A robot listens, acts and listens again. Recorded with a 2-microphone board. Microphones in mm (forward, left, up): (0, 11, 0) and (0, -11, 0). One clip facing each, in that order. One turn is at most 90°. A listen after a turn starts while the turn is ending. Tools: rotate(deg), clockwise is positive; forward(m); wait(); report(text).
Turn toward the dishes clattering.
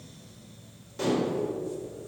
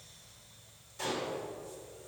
rotate(-30)
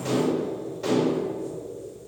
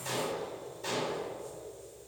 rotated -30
rotate(-90)
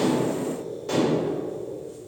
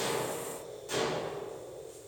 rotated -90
rotate(-30)
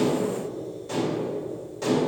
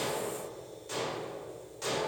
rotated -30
report("Found it: dishes clattering, straight ahead.")